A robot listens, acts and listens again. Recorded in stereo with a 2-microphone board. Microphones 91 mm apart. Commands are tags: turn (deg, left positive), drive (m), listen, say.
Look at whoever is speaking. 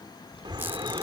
<turn deg="70"/>
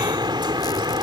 <listen/>
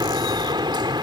<listen/>
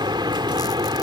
<say>I heard a child speaking, but can't make it out now. It was about straight ahead or 40° left.</say>